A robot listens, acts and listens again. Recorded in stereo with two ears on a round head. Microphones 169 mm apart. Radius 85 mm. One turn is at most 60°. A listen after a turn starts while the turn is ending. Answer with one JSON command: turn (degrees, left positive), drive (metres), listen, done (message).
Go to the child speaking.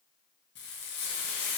{"listen": true}
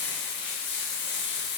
{"listen": true}
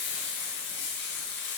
{"done": "I can't make out a child speaking, only frying."}